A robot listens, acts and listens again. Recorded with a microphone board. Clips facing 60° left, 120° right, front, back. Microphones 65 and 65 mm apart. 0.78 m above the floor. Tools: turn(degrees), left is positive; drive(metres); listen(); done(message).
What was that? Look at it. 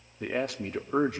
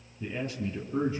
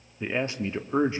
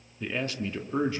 turn(degrees=65)
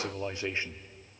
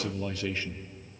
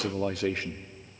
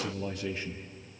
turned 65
done("Found it: a man speaking, straight ahead, 1 to 2 m away.")